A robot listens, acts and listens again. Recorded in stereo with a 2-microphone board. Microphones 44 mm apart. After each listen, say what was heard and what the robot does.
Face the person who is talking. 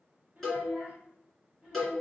The child speaking: about 40° right or 140° right. Turn 40° right.
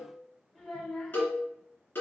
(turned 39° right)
Found it: a child speaking, straight ahead, 1 to 2 m away.